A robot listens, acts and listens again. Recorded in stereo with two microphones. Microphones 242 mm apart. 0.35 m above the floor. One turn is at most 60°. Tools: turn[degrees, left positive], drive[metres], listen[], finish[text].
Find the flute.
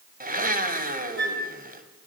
Thought: The flute: about 45° right or 135° right.
Action: turn[-45]
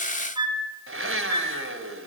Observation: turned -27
Thought: So it is at 20° right.
Action: turn[-20]
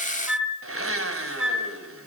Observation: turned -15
Action: finish[Facing the flute.]